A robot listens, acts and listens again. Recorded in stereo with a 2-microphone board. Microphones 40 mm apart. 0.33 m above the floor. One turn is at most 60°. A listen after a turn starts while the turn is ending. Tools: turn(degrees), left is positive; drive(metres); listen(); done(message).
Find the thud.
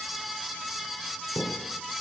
turn(degrees=40)
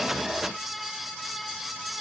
listen()
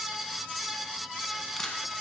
done("I heard a thud, but can't make it out now. It was about straight ahead or 100° left.")